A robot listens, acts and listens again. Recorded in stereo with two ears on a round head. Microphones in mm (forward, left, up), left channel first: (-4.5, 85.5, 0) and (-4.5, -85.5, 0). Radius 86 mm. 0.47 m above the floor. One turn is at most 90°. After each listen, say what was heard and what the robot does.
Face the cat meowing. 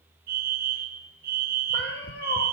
The cat meowing: about 55° left or 125° left. Turn 55° left.
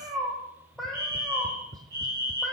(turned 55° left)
Found it: a cat meowing, straight ahead.